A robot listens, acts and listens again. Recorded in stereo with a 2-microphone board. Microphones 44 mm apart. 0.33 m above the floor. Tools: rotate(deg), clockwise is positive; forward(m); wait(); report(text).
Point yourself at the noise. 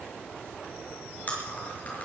rotate(-35)
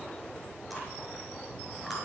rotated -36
report("Found it: chewing, straight ahead.")